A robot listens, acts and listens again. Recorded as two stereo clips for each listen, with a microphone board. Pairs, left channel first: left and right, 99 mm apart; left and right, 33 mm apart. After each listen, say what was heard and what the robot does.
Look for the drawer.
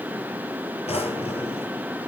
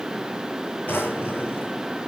Turn 90° left.
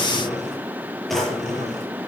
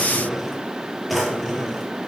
Facing the drawer, over 4 m away.